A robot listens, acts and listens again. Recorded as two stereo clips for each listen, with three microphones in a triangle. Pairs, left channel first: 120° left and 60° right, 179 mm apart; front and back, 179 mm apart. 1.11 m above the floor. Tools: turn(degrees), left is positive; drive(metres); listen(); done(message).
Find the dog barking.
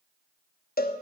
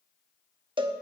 listen()
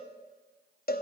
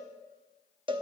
listen()
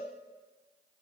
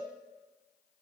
done("I can't make out a dog barking, only a cowbell.")